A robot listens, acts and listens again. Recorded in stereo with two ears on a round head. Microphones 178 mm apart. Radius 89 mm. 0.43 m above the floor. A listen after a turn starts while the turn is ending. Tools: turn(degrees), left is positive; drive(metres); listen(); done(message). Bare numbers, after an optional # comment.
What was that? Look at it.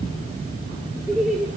turn(-30)
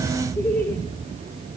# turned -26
turn(30)
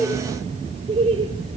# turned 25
# So it is at 30° right.
turn(-30)
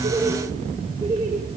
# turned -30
# The laughter is now 20° right.
turn(-20)
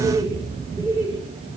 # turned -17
# The laughter is now 10° right.
turn(-10)
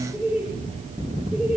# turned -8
done("Facing the laughter, 2 to 4 m away.")